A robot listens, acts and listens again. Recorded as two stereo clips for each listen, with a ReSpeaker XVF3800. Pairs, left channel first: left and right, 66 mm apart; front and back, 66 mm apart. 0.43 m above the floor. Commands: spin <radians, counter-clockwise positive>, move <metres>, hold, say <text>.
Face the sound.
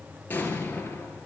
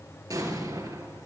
spin 2.71
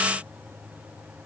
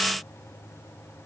say I heard an explosion from this way, but can't make it out now.